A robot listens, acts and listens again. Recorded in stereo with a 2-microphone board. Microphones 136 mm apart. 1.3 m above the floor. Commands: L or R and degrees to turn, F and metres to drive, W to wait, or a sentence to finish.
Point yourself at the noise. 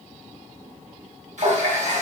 R60
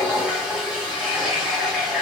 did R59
Found it: a running tap, straight ahead, 1 to 2 m away.